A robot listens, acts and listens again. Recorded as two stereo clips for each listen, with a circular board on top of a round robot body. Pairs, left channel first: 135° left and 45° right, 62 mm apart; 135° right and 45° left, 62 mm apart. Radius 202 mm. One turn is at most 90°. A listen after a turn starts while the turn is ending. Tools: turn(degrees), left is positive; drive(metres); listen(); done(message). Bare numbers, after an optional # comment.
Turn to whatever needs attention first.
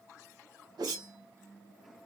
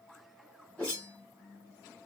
listen()
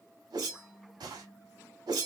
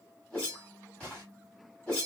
listen()
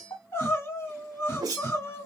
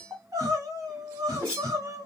# The crying: 85° left.
turn(85)
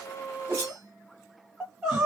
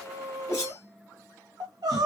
# The crying is now 40° left.
turn(40)
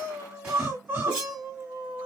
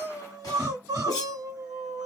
# The crying is now 20° left.
turn(20)
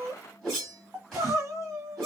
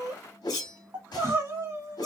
done("Facing the crying.")